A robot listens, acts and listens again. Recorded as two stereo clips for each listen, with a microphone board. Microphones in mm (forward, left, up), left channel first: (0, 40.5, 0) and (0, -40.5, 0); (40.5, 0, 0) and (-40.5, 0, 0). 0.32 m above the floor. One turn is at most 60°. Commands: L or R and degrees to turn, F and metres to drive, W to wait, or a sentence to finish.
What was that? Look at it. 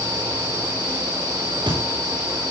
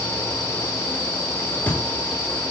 R60
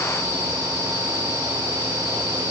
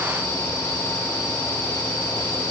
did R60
I heard a thud from this way, but can't make it out now.